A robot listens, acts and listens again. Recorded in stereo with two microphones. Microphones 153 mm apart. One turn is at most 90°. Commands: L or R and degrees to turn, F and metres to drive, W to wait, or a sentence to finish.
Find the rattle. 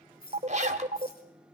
L75
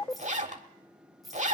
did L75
Found it: a rattle, straight ahead, 2 to 4 m away.